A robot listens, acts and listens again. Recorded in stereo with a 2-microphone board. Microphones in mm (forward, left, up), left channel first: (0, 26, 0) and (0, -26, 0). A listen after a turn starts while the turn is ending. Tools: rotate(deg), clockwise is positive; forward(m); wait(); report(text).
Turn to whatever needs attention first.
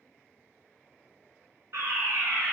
rotate(60)
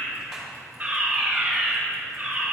rotate(35)
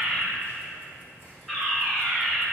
report("Facing the fire alarm, 1 to 2 m away.")